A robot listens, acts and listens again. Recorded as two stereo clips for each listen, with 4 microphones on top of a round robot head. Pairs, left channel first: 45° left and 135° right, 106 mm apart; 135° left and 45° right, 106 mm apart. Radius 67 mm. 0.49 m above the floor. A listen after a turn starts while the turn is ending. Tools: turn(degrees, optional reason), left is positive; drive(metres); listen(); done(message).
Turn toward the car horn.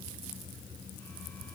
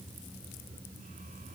listen()
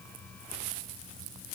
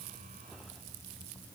listen()
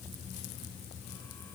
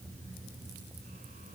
done("I can't make out a car horn to turn to.")